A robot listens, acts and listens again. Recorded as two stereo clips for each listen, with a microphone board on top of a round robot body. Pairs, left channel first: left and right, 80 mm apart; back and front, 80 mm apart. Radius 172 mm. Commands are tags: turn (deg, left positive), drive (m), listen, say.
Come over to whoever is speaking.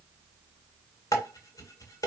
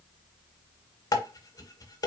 <listen/>
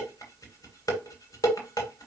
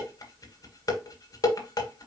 <listen/>
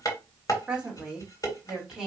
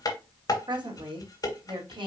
<turn deg="-10"/>
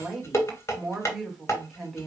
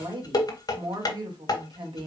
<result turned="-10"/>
<drive m="1.0"/>
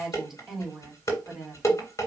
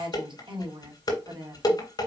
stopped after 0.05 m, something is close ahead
<say>Something is in my way. I am facing the woman speaking but have not reached it.</say>